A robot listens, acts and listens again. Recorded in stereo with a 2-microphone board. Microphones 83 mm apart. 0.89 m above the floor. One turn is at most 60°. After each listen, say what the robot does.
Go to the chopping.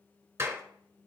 Keep listening.
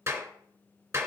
Keep listening.
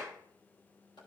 Turn 60° left.
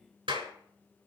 Keep listening.
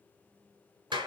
Keep listening.
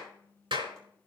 I heard chopping, but can't make it out now. It was about 5° left or 55° left. I did not reach it.